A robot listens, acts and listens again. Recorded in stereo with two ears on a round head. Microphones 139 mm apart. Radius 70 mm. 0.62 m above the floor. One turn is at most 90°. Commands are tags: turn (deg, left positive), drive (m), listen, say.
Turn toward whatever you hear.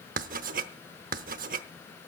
<turn deg="-55"/>
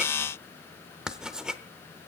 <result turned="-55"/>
<say>Facing the writing, under 1 m away.</say>